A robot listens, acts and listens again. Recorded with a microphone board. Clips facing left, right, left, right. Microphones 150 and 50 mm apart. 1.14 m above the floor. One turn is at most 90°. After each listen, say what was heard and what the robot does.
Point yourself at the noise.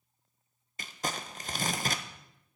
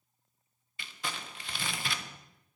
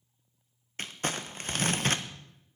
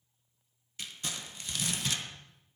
The crumpling: about 40° left or 140° left. Turn 40° left.
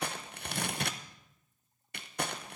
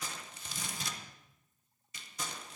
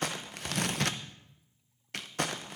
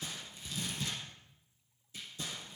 So it is at 95° left. Turn 90° left.
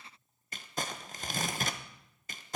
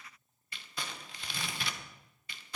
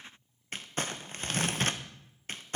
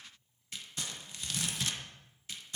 The crumpling is now 50° left. Turn 50° left.
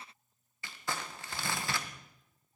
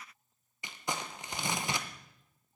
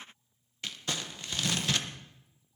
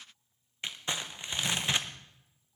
The crumpling is now 20° right. Turn 20° right.
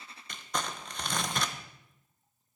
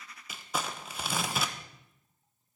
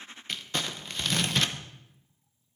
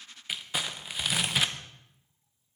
Found it: crumpling, straight ahead.